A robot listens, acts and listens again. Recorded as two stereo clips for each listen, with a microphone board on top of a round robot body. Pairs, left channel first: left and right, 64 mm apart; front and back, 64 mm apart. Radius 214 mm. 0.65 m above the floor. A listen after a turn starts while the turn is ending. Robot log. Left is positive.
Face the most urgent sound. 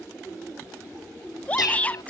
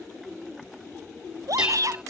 note: The shout: 155° left.
cmd yaw +155
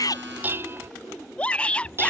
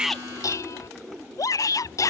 note: The shout is now 20° left.
cmd yaw +20
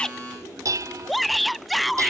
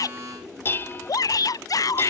end: Facing the shout.